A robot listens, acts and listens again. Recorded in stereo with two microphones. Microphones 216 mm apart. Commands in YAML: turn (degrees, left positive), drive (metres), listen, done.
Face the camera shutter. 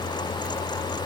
listen: true
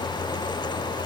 listen: true
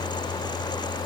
done: "I can't make out a camera shutter."